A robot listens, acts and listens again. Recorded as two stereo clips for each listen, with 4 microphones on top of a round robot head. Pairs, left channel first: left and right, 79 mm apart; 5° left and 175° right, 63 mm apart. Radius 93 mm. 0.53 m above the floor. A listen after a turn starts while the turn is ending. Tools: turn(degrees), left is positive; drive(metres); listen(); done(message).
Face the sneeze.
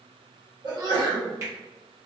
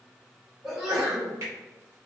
turn(degrees=-95)
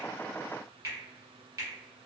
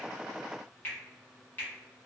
done("I heard a sneeze from this way, but can't make it out now.")